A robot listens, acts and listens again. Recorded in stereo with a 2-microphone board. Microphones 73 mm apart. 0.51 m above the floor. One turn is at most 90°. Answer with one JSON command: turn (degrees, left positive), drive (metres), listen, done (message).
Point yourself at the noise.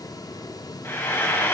{"turn": 30}
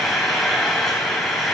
{"done": "Found it: frying, straight ahead."}